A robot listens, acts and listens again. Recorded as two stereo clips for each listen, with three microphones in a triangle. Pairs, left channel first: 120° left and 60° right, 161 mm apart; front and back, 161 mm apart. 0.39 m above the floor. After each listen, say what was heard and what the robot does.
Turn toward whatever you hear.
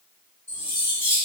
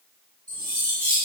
The cutlery clinking: 170° right. Turn 170° right.
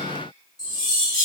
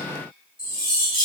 The cutlery clinking is now 10° right. Turn 10° right.
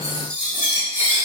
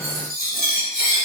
Facing the cutlery clinking.